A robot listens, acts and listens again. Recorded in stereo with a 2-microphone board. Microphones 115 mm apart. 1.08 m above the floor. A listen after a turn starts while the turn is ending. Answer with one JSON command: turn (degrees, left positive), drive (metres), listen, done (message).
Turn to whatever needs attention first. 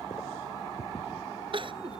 {"turn": -50}
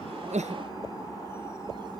{"listen": true}
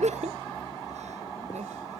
{"turn": -80}
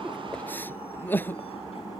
{"turn": 15}
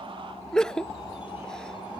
{"done": "Found it: crying, straight ahead."}